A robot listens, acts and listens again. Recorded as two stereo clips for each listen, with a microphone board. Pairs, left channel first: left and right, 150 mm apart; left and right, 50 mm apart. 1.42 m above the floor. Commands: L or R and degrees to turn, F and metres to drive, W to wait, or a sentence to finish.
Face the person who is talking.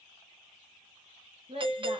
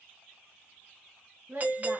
R40
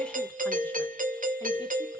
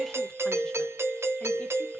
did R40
W
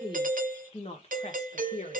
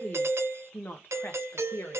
L55
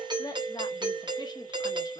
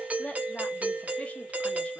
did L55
L25
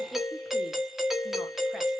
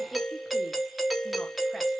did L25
W
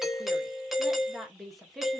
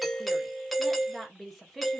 Facing the woman speaking.